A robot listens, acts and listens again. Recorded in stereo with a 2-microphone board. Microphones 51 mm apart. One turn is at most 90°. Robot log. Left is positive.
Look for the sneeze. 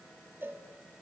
cmd idle
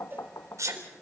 cmd yaw -90
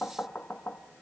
end: I heard a sneeze from this way, but can't make it out now.